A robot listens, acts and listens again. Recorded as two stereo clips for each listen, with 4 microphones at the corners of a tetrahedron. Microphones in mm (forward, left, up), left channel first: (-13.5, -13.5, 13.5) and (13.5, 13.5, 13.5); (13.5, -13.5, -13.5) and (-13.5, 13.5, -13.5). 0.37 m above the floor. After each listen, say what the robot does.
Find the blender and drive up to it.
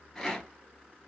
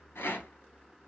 Keep listening.
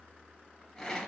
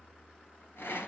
Keep listening.
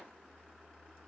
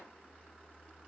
I can't make out a blender, only a rattle.